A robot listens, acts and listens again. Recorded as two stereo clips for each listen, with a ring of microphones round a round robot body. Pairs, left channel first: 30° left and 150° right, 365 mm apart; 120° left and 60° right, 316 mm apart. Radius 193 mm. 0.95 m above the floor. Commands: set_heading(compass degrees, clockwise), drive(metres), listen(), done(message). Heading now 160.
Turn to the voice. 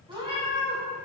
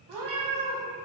listen()
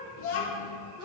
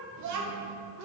set_heading(185)
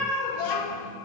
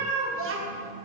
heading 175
set_heading(185)
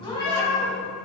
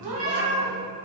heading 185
listen()
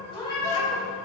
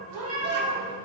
listen()
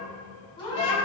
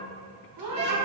done("I heard a child speaking from this way, but can't make it out now.")